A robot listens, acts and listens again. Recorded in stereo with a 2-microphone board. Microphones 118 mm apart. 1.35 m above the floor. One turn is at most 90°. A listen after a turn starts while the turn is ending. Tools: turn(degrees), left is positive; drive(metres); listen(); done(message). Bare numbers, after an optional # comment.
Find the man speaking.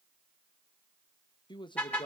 # The man speaking: about 45° left or 135° left.
turn(45)
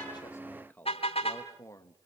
# So it is at 25° left.
turn(25)
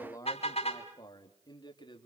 # The man speaking is now 40° left.
turn(40)
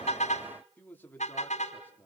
# The man speaking is now 15° left.
turn(15)
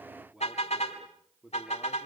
done("Facing the man speaking.")